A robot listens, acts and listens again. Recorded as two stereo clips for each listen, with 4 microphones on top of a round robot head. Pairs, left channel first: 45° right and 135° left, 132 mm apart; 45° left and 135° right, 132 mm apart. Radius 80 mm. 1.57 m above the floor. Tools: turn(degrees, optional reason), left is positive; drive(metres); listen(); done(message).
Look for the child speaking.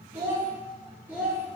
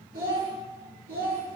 turn(degrees=-145, reason="The child speaking: 145° right.")
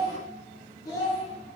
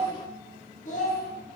turn(degrees=25, reason="The child speaking is now 25° left.")
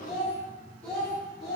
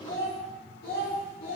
turn(degrees=50, reason="The child speaking is now 50° left.")
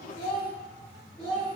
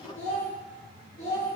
turn(degrees=40, reason="The child speaking is now 40° left.")
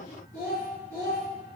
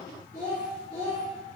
done("Facing the child speaking.")